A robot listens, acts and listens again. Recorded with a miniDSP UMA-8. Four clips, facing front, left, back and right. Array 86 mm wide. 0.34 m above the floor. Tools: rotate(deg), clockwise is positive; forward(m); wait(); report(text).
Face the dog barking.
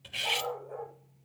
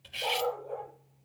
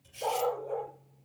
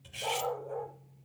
rotate(-160)
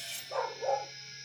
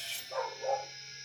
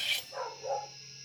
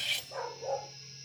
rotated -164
rotate(-10)
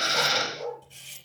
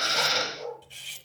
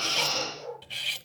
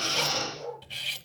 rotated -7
rotate(-10)
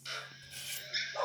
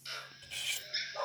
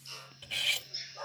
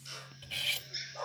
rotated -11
rotate(-10)
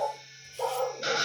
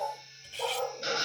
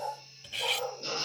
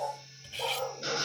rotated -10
report("Facing the dog barking.")